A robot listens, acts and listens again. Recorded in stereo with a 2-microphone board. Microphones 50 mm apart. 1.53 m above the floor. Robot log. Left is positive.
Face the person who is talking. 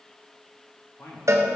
note: The man speaking: about 70° left or 110° left.
cmd yaw +70
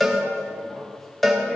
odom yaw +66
cmd idle
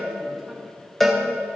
cmd idle
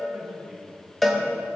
end: Facing the man speaking.